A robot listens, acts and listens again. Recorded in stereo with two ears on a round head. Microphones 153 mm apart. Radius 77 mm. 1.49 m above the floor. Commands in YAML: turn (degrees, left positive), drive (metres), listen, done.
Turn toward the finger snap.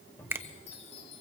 turn: -30
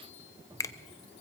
turn: 20
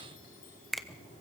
done: "Found it: a finger snap, straight ahead, under 1 m away."